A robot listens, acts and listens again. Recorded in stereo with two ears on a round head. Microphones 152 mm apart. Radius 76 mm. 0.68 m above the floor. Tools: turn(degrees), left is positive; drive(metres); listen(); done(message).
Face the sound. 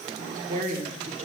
turn(degrees=-45)
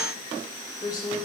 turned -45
turn(degrees=30)
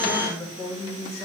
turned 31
turn(degrees=20)
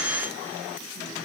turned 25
listen()
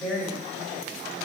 done("Facing the woman speaking, 2 to 4 m away.")